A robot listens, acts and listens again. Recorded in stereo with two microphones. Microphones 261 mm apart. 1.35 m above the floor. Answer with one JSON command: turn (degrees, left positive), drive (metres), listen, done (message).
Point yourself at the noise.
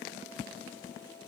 {"listen": true}
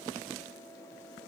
{"listen": true}
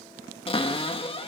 {"turn": 20}
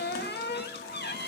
{"turn": 140}
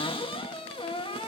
{"turn": 20}
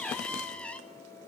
{"done": "Facing the cupboard door."}